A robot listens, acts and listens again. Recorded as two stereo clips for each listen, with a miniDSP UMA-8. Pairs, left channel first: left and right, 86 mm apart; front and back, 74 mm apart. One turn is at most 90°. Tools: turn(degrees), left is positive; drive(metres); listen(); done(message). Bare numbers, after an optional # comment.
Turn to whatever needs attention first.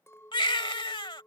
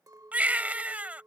# The baby crying: 110° left.
turn(90)
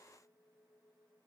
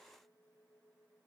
# Nothing new. It was at 20° left.
turn(20)
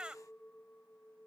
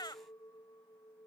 # The baby crying is now 10° right.
turn(-10)
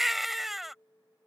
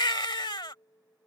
done("Found it: a baby crying, straight ahead.")